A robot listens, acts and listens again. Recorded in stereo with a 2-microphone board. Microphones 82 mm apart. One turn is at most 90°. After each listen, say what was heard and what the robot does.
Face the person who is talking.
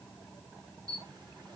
Keep listening.
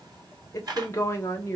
The woman speaking: about 30° left or 150° left. Turn 30° left.
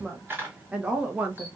So it is at 20° right. Turn 20° right.
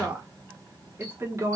The woman speaking is now 35° right. Turn 35° right.
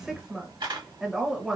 Facing the woman speaking, 1 to 2 m away.